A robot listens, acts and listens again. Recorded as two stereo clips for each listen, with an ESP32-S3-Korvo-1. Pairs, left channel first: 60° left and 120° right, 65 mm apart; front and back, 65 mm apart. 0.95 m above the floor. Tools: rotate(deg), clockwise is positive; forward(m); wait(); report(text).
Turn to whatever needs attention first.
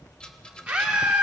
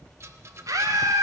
rotate(-170)
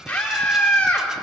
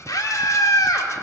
report("Found it: a scream, straight ahead, 2 to 4 m away.")